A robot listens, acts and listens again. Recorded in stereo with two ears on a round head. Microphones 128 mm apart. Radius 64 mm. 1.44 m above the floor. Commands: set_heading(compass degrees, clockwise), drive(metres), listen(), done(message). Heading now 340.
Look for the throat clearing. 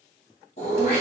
set_heading(290)
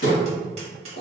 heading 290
set_heading(210)
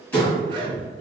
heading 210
set_heading(200)
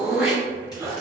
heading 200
done("Found it: throat clearing, straight ahead.")